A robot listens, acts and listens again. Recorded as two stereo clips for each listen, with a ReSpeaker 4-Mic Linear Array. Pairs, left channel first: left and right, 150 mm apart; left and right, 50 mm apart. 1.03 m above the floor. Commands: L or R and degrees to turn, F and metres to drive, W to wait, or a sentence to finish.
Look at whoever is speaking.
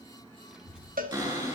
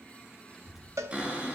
R30
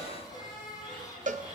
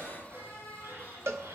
L25
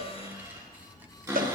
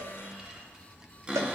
R15
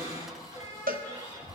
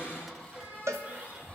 Facing the child speaking, 1 to 2 m away.